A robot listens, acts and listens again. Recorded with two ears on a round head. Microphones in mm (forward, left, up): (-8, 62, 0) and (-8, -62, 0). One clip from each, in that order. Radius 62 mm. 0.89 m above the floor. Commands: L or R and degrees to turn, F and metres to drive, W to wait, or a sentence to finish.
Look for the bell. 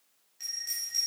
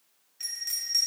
R20
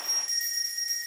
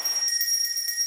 R140
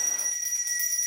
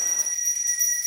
L10
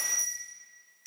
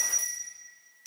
Facing the bell, 1 to 2 m away.